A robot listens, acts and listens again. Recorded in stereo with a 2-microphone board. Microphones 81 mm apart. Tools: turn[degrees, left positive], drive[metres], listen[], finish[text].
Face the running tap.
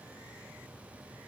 Action: listen[]
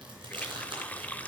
Thought: The running tap: about 20° left or 160° left.
Action: turn[20]
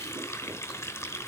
Thought: So it is at 140° left.
Action: turn[140]
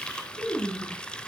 Thought: The running tap is now 15° left.
Action: turn[15]
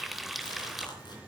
Action: finish[Facing the running tap, under 1 m away.]